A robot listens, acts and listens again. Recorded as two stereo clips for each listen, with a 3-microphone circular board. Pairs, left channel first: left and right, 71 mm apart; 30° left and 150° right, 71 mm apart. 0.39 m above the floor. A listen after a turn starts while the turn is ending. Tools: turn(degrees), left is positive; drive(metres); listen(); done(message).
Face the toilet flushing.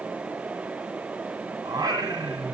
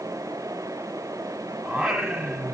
listen()
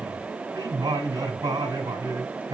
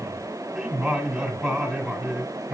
listen()
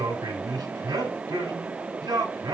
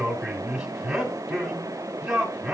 done("I can't make out a toilet flushing to turn to.")